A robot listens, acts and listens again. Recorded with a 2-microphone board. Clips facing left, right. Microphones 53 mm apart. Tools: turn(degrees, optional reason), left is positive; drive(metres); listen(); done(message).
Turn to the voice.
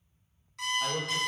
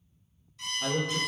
turn(degrees=35, reason="The man speaking: about 35° left or 145° left.")
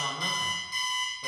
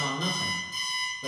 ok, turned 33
turn(degrees=10, reason="So it is at 10° left.")
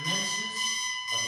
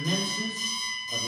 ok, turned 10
done("Facing the man speaking, 1 to 2 m away.")